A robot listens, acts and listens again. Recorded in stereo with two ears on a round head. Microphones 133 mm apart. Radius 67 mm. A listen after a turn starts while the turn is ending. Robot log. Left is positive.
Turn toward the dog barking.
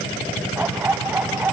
cmd yaw -30
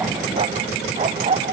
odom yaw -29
note: So it is at 140° right.
cmd yaw -140
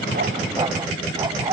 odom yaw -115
note: The dog barking is now 25° right.
cmd yaw -25
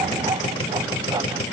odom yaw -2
note: The dog barking is now 25° right.
cmd yaw -25
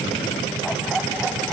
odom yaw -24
cmd idle
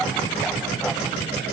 cmd idle
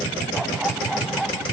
end: Facing the dog barking.